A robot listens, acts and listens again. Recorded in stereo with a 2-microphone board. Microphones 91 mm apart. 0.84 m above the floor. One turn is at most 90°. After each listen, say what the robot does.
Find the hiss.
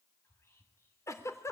Keep listening.
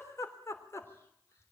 Keep listening.
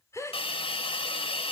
Turn 90° left.
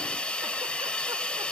Turn 10° left.
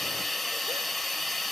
Facing the hiss.